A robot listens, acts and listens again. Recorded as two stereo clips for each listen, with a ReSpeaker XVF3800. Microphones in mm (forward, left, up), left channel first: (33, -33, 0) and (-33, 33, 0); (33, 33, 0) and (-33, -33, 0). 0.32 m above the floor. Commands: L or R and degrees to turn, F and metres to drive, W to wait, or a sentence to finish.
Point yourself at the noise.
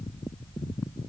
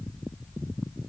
W
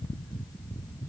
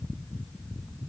W
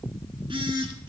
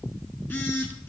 L115
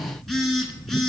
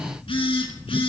L40
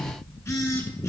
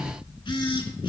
L15
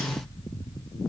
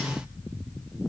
W
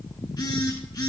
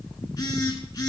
Found it: a phone buzzing, straight ahead, 1 to 2 m away.